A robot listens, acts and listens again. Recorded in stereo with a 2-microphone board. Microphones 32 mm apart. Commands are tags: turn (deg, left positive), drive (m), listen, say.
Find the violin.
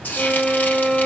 <turn deg="20"/>
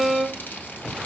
<say>Found it: a violin, straight ahead, under 1 m away.</say>